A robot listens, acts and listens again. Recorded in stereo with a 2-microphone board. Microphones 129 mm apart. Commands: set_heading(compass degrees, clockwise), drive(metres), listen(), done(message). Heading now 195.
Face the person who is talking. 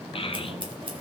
set_heading(150)
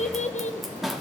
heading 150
set_heading(65)
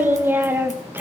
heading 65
set_heading(85)
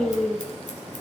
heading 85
done("Found it: a child speaking, straight ahead.")